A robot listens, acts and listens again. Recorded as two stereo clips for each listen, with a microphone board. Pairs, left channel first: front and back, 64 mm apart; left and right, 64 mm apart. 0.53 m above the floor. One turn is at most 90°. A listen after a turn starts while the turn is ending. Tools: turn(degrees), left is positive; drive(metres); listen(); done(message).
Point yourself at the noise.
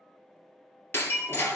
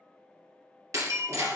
turn(degrees=-55)
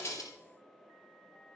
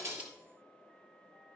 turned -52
done("I heard breaking glass from this way, but can't make it out now.")